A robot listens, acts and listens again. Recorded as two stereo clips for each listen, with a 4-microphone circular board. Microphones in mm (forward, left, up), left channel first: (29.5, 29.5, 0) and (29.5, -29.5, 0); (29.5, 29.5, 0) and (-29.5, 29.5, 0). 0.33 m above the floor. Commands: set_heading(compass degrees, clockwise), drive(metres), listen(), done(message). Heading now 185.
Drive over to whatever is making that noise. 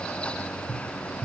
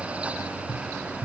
set_heading(280)
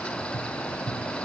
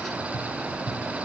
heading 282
drive(1.0)
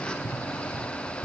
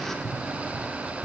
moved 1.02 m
drive(1.0)
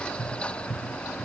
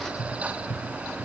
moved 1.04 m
drive(1.0)
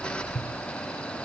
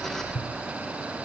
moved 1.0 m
set_heading(262)
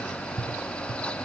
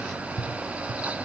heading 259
drive(1.0)
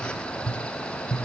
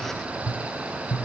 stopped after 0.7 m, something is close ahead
done("Arrived at the tapping, straight ahead.")